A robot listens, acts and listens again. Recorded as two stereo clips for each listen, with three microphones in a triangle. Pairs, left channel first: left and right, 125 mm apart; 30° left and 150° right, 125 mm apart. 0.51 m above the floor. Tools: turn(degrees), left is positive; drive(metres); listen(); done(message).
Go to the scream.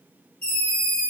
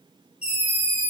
turn(degrees=10)
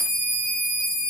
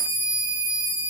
drive(metres=1.0)
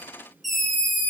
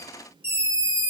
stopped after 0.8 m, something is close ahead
done("I am next to the scream.")